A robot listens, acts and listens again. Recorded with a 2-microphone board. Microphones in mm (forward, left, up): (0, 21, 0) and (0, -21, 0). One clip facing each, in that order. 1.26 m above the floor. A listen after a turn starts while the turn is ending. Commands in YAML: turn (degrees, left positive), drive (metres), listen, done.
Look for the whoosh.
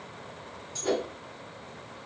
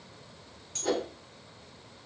turn: 30
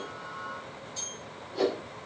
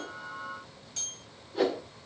turn: -15
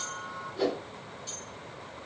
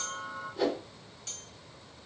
done: "Found it: a whoosh, straight ahead, 1 to 2 m away."